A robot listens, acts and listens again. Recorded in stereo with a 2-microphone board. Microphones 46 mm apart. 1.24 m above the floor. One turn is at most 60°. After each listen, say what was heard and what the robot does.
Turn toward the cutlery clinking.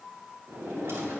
Keep listening.
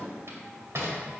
Keep listening.
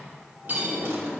The cutlery clinking: about 40° right or 140° right. Turn 40° right.
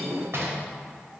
Keep listening.
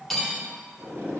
Found it: cutlery clinking, straight ahead, 2 to 4 m away.